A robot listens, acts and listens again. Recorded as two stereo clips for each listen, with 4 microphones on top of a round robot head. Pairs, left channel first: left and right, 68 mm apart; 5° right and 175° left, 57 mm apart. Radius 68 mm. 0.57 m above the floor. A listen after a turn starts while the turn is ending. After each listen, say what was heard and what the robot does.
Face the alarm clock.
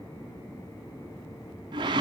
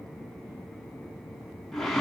Keep listening.
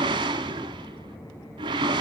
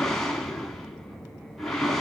Keep listening.
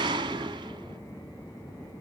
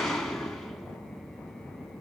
I can't make out an alarm clock, only a whoosh.